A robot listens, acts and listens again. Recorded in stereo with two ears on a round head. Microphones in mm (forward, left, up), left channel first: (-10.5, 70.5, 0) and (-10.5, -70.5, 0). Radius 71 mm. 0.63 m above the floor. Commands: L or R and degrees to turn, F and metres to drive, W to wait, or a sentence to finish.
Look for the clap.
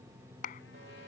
L60
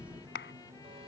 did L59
L65
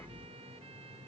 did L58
W
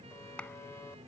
Facing the clap.